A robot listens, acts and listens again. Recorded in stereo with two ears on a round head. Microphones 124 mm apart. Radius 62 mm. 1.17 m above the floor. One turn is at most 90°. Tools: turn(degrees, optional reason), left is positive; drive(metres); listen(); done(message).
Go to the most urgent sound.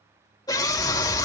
turn(degrees=30, reason="The scream: about 30° left or 150° left.")
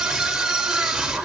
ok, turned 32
drive(metres=1.0)
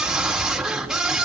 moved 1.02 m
drive(metres=1.0)
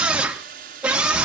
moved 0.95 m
turn(degrees=-10, reason="The scream is now 10° right.")
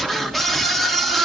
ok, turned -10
drive(metres=1.0)
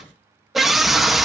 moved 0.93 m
drive(metres=1.0)
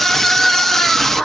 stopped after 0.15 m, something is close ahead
done("I am next to the scream.")